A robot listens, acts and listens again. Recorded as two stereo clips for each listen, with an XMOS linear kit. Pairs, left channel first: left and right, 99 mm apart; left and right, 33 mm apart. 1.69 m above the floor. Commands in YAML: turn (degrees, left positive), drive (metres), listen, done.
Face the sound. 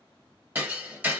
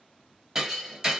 turn: -20
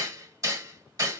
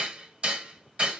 turn: -145
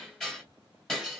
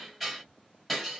done: "Facing the hammering."